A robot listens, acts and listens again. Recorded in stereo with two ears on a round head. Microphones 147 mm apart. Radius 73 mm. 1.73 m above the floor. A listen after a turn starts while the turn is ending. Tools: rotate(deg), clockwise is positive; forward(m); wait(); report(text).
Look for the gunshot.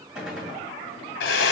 rotate(30)
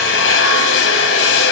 wait()
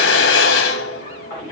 report("I heard a gunshot, but can't make it out now. It was about 25° left or 145° right.")